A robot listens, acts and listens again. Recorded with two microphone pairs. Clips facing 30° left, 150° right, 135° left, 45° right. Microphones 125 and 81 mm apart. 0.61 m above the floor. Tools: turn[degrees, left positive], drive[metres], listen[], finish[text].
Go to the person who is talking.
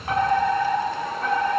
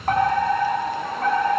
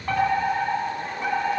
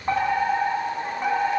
Action: listen[]
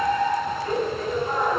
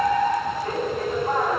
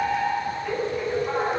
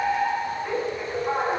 Action: listen[]
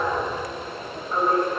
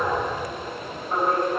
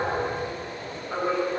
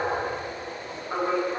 Action: finish[I can't make out anyone speaking to turn to.]